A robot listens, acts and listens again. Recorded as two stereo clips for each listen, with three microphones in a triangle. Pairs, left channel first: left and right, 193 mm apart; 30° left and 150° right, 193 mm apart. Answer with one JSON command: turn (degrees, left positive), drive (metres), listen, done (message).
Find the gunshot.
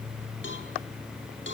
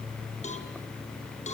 {"listen": true}
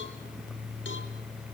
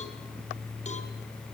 {"listen": true}
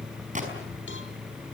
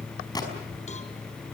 {"turn": -40}
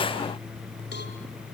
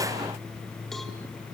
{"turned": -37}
{"done": "Facing where the gunshot came from. I can't hear it now."}